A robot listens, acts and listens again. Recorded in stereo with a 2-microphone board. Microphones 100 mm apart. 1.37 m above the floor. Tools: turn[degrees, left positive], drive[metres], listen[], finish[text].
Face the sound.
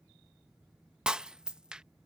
Action: turn[-30]
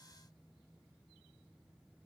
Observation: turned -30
Action: listen[]
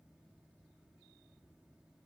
Action: finish[I heard breaking glass, but can't make it out now. It was about 20° left or 140° right.]